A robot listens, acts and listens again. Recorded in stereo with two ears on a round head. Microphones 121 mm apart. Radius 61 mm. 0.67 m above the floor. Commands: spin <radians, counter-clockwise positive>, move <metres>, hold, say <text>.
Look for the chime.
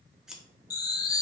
spin 0.52
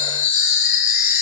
spin 2.09
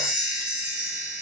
spin -0.17
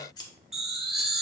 say Facing the chime.